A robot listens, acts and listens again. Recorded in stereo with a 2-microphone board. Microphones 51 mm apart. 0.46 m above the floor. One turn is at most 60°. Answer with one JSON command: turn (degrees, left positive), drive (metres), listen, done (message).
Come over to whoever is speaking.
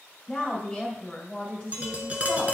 {"turn": 30}
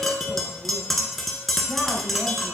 {"listen": true}
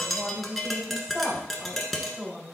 {"turn": -15}
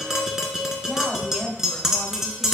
{"drive": 1.0}
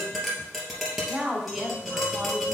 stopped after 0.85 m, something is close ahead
{"done": "I am next to the woman speaking."}